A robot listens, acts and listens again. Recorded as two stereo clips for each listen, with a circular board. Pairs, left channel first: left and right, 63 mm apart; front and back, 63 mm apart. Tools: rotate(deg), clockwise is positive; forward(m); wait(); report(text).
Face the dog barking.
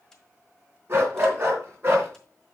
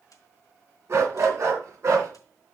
rotate(140)
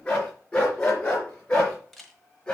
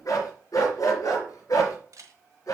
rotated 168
rotate(-20)
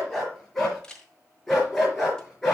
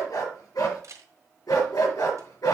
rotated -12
report("Found it: a dog barking, straight ahead, over 4 m away.")